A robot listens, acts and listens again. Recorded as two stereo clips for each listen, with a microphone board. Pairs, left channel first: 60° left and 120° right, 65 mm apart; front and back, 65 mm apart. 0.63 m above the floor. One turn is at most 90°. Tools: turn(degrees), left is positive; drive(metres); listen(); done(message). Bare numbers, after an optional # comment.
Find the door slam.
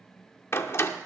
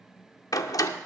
# The door slam: 15° left.
turn(15)
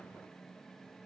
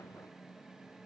done("Facing where the door slam came from. I can't hear it now.")